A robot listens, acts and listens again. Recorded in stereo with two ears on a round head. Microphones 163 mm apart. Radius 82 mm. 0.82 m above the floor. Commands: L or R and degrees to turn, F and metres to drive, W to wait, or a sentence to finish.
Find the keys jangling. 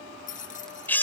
L45
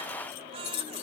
L95
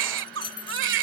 L30
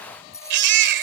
L15
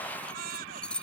Found it: keys jangling, straight ahead.